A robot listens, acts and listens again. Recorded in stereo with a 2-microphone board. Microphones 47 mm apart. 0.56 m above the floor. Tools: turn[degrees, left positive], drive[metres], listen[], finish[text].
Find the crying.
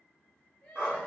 Thought: The crying: about 25° left or 155° left.
Action: turn[25]
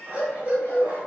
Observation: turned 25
Action: listen[]
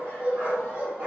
Action: listen[]
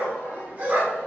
Action: finish[I heard crying, but can't make it out now. It was about straight ahead or 130° left.]